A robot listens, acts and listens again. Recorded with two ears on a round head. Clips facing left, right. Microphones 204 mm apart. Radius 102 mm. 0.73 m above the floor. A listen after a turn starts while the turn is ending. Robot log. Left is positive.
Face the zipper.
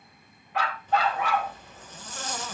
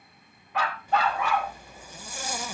cmd yaw -30
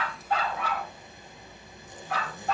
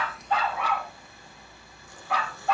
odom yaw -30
note: So it is at 20° left.
cmd yaw +20
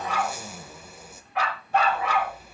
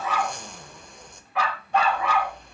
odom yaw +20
end: Found it: a zipper, straight ahead, 1 to 2 m away.